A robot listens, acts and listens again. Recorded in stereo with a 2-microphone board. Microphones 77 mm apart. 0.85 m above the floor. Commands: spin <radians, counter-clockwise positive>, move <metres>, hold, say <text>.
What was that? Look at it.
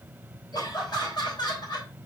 spin 1.22
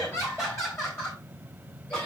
spin 0.52
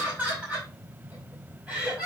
spin -0.17
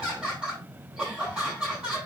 say Found it: laughter, straight ahead, over 4 m away.